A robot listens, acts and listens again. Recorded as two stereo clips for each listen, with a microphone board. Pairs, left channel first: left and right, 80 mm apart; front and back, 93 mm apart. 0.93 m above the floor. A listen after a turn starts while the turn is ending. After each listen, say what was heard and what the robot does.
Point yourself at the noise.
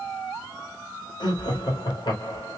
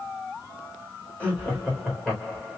The laughter: 80° left. Turn 80° left.
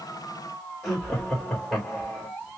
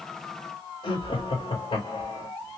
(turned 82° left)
Found it: laughter, straight ahead.